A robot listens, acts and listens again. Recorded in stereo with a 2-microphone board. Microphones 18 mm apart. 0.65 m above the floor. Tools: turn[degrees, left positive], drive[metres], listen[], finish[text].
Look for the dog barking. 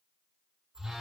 Action: listen[]
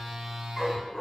Thought: The dog barking: about 40° left or 140° left.
Action: turn[40]
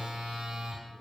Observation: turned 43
Action: listen[]
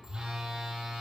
Action: listen[]
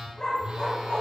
Thought: So it is at 95° left.
Action: turn[95]
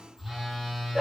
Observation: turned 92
Thought: The dog barking is now 15° right.
Action: turn[-15]
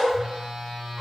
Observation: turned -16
Action: finish[Facing the dog barking.]